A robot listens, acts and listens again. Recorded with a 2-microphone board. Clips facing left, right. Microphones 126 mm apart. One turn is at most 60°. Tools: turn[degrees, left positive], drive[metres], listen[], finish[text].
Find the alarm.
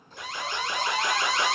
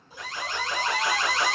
Thought: The alarm: about 65° left or 115° left.
Action: turn[60]
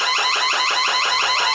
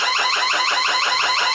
Thought: So it is at 35° left.
Action: turn[35]
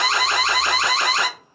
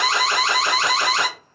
Action: finish[Found it: an alarm, straight ahead, 1 to 2 m away.]